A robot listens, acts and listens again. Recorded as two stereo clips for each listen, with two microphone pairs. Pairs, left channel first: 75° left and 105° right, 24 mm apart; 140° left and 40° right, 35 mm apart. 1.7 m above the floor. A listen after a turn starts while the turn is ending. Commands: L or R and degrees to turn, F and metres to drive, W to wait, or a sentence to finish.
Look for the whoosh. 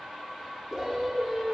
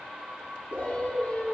R25
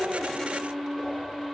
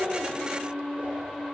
W
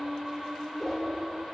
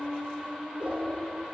W
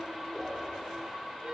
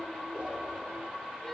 I heard a whoosh from this way, but can't make it out now.